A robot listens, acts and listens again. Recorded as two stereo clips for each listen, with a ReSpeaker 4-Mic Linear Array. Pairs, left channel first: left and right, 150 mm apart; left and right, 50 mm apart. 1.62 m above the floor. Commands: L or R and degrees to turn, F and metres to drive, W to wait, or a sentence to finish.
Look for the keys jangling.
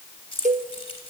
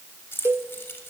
L40
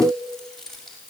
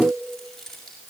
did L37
Found it: keys jangling, straight ahead.